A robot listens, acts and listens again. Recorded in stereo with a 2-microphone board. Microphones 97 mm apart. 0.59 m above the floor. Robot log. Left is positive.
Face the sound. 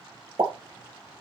note: The pop: about 70° right or 110° right.
cmd yaw -70
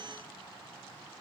cmd idle
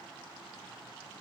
end: I heard a pop, but can't make it out now. It was about straight ahead or 40° right.